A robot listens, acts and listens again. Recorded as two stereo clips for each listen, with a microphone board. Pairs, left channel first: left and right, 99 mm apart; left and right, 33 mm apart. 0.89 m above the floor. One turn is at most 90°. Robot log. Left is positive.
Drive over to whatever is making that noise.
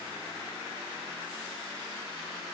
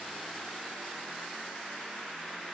cmd idle
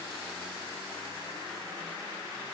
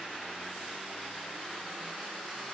cmd idle
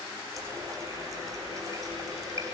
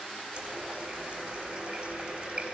note: The running tap: about 35° right or 145° right.
cmd yaw -35
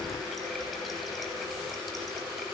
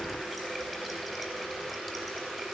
cmd fwd 1.0
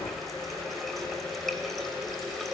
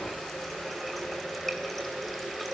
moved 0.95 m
cmd fwd 1.0
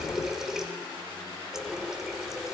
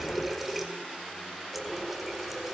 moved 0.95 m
cmd fwd 1.0
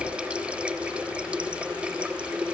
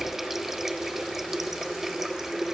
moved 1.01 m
note: The running tap is now 10° right.
cmd yaw -10
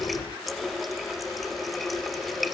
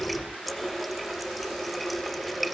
cmd fwd 1.0
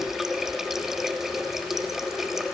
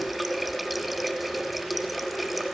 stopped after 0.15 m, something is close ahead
end: I am next to the running tap.